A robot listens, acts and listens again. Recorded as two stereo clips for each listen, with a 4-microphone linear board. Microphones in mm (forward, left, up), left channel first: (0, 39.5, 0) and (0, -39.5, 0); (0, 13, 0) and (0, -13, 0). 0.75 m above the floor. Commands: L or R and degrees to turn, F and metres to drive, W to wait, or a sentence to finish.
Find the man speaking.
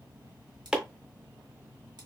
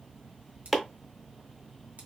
W
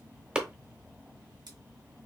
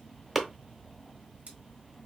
W
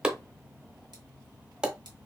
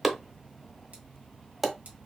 I can't make out a man speaking, only chopping.